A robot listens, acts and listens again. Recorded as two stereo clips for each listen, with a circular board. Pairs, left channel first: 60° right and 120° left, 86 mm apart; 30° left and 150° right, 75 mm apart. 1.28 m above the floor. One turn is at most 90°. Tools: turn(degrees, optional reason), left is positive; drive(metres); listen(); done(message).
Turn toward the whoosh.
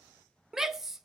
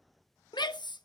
listen()
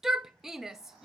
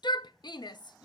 listen()
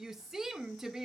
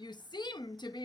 done("I can't make out a whoosh, only a shout.")